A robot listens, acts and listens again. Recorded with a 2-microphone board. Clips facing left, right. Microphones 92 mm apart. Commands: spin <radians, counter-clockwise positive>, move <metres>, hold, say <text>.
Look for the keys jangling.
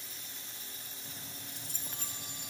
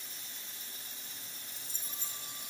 spin 1.13
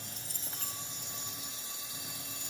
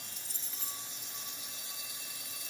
spin 1.05
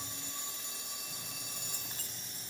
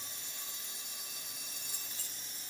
spin 0.87
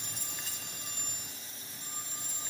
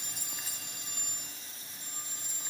say Facing the keys jangling.